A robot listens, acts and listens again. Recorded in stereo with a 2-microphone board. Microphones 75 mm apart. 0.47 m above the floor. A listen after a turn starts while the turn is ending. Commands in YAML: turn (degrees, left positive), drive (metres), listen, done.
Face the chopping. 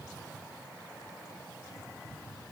listen: true
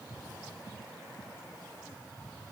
listen: true
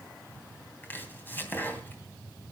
turn: 25
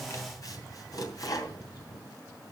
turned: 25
turn: 130
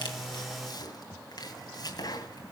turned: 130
turn: 55
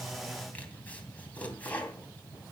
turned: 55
turn: 20
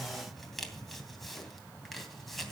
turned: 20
done: "Facing the chopping, 2 to 4 m away."